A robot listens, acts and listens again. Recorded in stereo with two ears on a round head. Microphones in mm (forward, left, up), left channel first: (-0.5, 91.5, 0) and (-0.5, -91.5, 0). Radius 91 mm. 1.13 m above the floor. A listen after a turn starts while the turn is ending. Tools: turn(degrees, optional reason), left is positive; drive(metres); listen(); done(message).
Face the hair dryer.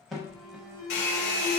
turn(degrees=60, reason="The hair dryer: about 60° left or 120° left.")
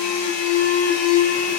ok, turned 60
listen()
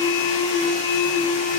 listen()
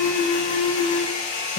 turn(degrees=45, reason="So it is at 45° left.")
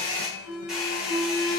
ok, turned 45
done("Found it: a hair dryer, straight ahead, 1 to 2 m away.")